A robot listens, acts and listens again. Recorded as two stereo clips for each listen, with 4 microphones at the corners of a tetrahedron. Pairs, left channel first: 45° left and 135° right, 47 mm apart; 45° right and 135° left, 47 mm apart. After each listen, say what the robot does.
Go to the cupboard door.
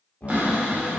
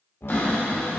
Turn 75° right.
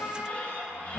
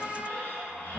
Drive 1.0 m forward.
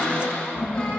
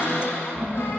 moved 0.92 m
Turn 20° right.
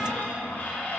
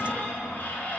Drive 1.0 m forward.
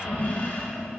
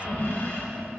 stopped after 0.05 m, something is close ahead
Arrived at the cupboard door, straight ahead.